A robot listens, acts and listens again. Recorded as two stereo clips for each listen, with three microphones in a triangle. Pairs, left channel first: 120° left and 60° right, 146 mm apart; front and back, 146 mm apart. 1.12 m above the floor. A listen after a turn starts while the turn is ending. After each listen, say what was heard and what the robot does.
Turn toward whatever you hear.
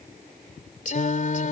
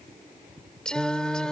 The singing: 85° left. Turn 85° left.
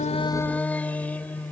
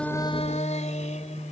The singing is now 40° left. Turn 40° left.
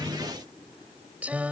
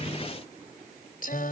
The singing is now 20° left. Turn 20° left.
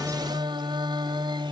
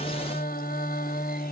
Found it: singing, straight ahead.